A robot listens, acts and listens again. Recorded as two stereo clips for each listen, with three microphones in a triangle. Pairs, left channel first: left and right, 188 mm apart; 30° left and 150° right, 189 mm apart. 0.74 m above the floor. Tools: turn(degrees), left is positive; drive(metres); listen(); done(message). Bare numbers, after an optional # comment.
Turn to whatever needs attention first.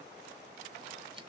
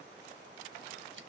listen()
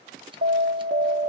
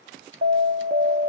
# The alarm: 115° right.
turn(-115)
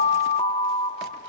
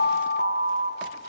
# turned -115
# The alarm is now 45° left.
turn(45)
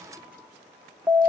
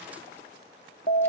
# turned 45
done("Facing the alarm, under 1 m away.")